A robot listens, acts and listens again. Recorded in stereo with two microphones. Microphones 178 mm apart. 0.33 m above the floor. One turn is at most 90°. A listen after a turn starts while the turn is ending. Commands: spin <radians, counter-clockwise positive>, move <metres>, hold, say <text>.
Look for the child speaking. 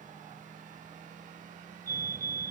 hold
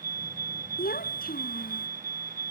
spin 0.96
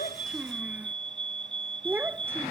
spin -0.17
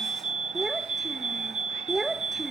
say Found it: a child speaking, straight ahead.